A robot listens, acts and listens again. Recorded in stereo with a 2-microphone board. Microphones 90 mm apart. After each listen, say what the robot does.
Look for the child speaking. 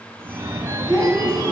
Turn 30° left.
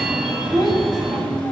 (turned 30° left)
Turn 130° left.
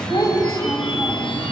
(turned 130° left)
Turn 40° left.
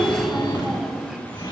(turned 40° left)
Facing the child speaking.